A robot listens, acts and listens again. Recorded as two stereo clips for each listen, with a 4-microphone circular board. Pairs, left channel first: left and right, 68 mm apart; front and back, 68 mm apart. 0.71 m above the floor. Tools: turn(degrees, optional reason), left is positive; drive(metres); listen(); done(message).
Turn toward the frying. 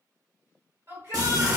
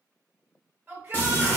turn(degrees=-65, reason="The frying: 65° right.")
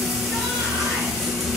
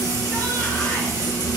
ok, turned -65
done("Found it: frying, straight ahead.")